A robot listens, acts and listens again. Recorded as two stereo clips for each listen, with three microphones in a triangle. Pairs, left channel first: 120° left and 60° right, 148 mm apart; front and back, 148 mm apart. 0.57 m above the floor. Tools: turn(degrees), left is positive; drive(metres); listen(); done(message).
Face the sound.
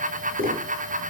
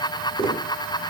turn(degrees=-55)
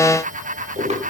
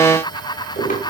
turn(degrees=-20)
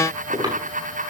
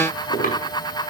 done("Facing the tapping, over 4 m away.")